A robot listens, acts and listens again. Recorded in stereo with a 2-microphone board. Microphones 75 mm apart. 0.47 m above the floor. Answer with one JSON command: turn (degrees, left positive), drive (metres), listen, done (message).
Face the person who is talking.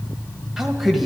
{"turn": 30}
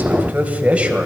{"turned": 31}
{"turn": -30}
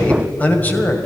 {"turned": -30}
{"turn": 25}
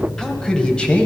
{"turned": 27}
{"turn": 15}
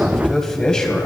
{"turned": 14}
{"turn": 15}
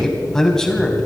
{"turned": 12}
{"done": "Found it: a man speaking, straight ahead, 2 to 4 m away."}